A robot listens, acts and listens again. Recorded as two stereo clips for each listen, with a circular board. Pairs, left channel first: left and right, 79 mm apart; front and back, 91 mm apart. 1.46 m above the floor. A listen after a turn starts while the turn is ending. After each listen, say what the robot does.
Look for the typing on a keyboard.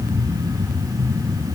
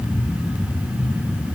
Keep listening.
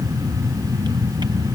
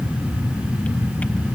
Keep listening.
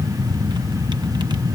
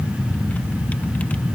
I can't make out typing on a keyboard.